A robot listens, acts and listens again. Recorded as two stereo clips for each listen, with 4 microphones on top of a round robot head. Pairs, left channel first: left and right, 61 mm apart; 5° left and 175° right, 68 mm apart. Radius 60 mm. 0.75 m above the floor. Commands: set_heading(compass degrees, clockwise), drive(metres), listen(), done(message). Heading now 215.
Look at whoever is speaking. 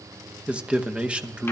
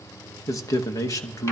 set_heading(235)
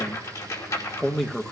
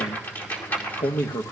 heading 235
done("Facing the man speaking, 1 to 2 m away.")